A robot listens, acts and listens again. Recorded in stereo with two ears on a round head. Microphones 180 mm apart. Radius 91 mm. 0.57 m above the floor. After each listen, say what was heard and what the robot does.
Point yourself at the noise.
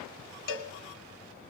The cowbell: about 65° left or 115° left. Turn 65° left.
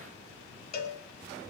So it is at 45° left. Turn 45° left.
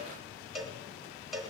Found it: a cowbell, straight ahead, 1 to 2 m away.